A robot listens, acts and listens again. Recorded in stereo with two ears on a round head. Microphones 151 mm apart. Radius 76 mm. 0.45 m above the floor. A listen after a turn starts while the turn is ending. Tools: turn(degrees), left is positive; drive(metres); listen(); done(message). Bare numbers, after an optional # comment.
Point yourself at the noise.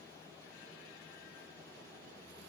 listen()
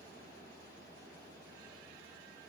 listen()
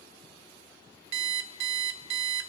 turn(-90)
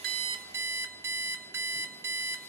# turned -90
# So it is at 15° right.
turn(-15)
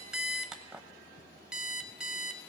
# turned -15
done("Facing the alarm clock, under 1 m away.")